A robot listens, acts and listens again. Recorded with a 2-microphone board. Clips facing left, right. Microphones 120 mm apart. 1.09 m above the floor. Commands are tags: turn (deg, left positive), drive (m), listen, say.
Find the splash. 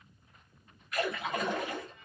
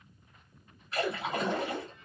<turn deg="-30"/>
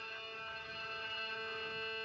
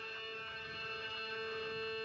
<listen/>
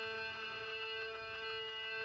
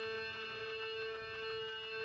<say>I heard a splash, but can't make it out now. It was about straight ahead or 120° right.</say>